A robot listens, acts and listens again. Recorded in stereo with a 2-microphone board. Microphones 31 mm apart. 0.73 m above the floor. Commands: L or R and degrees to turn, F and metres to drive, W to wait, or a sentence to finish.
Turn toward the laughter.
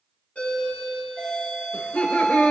L55
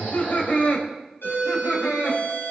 L80
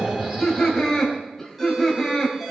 L10
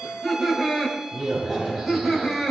Facing the laughter, over 4 m away.